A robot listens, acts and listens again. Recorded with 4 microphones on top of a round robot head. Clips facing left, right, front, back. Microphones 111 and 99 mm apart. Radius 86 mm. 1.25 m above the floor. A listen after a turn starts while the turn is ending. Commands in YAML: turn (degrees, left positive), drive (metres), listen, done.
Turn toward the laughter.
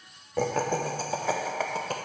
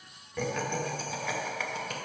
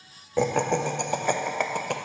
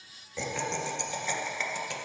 turn: 35
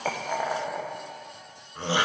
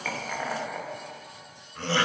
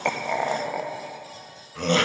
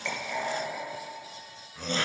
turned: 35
turn: 15
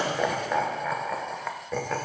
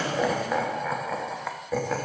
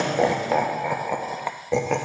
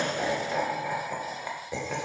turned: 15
done: "Facing the laughter, under 1 m away."